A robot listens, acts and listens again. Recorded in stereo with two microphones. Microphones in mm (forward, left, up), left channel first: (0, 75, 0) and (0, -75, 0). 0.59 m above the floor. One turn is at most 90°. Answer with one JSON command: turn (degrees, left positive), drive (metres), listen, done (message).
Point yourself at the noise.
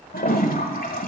{"turn": 90}
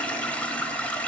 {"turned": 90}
{"turn": 10}
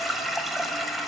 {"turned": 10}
{"done": "Facing the toilet flushing."}